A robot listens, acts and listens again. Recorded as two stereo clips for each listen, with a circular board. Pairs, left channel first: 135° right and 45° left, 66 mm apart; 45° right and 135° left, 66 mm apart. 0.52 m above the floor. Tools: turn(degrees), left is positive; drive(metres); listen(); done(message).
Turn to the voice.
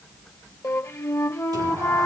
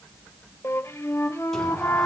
listen()
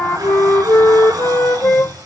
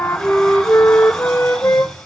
listen()
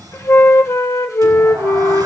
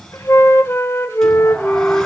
done("I can't make out anyone speaking, only a flute and a sliding door.")